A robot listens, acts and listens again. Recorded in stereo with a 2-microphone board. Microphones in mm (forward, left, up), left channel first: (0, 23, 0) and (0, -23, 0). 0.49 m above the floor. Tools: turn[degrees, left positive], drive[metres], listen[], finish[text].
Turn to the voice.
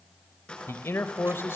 Thought: The man speaking: about 60° left or 120° left.
Action: turn[60]
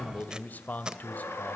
Thought: So it is at 45° left.
Action: turn[45]
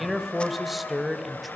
Action: finish[Facing the man speaking.]